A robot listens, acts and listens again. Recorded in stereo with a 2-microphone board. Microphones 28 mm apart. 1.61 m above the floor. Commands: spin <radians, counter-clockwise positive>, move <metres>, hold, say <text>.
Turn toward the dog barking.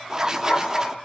spin 1.05
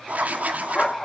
spin 0.52
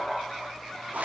spin 0.17
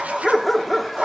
say Found it: a dog barking, straight ahead, 1 to 2 m away.